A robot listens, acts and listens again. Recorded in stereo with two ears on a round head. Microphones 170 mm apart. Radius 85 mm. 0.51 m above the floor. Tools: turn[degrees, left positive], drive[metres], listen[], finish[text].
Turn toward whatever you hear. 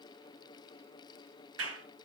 Action: turn[-90]
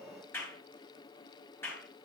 Thought: So it is at 10° left.
Action: turn[10]
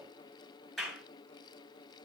Action: finish[Found it: a clap, straight ahead, over 4 m away.]